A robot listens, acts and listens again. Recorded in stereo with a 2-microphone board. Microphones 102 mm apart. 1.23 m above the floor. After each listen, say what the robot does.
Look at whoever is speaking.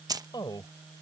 Turn 45° left.
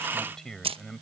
Found it: a man speaking, straight ahead.